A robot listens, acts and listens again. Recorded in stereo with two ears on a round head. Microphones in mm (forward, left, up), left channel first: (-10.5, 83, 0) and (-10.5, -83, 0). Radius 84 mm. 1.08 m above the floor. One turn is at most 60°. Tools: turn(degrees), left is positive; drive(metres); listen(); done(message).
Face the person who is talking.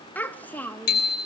turn(degrees=30)
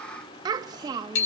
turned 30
turn(degrees=-20)
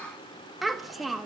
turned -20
done("Found it: a child speaking, straight ahead, 1 to 2 m away.")